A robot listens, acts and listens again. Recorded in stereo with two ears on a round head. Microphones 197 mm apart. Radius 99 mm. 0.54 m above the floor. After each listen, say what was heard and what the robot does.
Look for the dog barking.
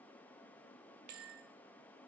Keep listening.
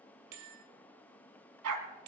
Turn 90° right.
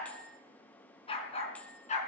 So it is at 35° left. Turn 35° left.
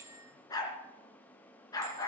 The dog barking is now 15° left. Turn 15° left.
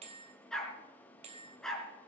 Facing the dog barking, 2 to 4 m away.